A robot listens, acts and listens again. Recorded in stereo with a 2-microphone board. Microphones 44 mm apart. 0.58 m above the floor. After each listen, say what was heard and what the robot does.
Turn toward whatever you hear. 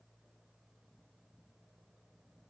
Keep listening.
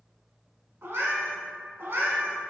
The cat meowing: about 55° right or 125° right. Turn 55° right.
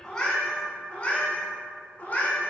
So it is at 40° left. Turn 40° left.
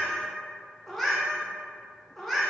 Found it: a cat meowing, straight ahead, 1 to 2 m away.